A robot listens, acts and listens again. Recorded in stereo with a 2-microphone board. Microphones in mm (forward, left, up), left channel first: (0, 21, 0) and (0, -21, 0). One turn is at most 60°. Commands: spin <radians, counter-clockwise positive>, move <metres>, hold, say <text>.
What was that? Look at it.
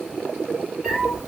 spin -0.26
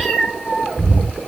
spin -0.35
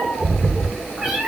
spin -0.44
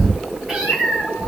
spin -0.26
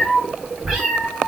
spin -0.52
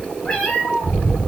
spin 0.35
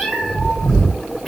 say Found it: a cat meowing, straight ahead, 2 to 4 m away.